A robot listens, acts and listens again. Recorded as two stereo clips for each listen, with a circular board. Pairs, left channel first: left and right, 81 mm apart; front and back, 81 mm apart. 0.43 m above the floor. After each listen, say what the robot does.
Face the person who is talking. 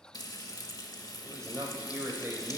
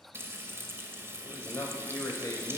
Turn 35° right.
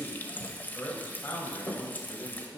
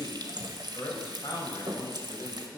Turn 35° left.
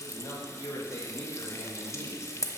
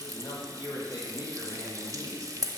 Turn 30° left.
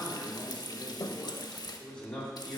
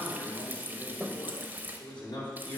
Turn 10° left.
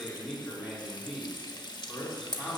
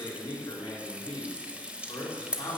Found it: a man speaking, straight ahead.